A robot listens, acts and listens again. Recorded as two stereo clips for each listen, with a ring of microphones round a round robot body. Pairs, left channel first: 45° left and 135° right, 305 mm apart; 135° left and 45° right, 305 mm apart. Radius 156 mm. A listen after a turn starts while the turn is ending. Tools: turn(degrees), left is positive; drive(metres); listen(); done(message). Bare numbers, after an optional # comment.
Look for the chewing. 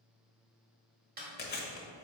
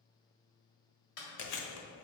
# The chewing: 105° left.
turn(105)
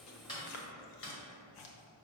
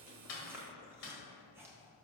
# The chewing is now 40° left.
turn(40)
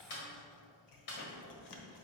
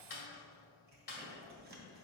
# The chewing is now 15° left.
turn(15)
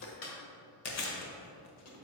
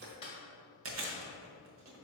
done("Facing the chewing.")